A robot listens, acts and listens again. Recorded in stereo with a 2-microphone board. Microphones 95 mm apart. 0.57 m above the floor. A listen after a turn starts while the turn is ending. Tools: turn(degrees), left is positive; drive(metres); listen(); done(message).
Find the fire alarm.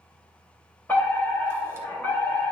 turn(degrees=20)
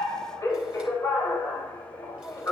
turn(degrees=140)
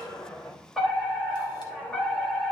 done("Facing the fire alarm.")